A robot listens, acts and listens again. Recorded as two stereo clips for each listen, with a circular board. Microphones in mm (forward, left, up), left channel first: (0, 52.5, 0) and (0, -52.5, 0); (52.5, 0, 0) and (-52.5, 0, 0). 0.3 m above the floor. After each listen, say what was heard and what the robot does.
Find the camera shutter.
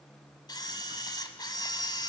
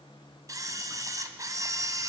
The camera shutter: 130° left. Turn 130° left.
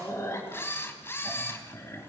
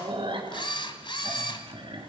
The camera shutter is now 25° left. Turn 25° left.
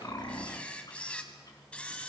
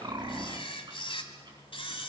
The camera shutter is now 15° left. Turn 15° left.
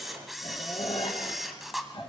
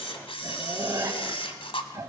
Found it: a camera shutter, straight ahead.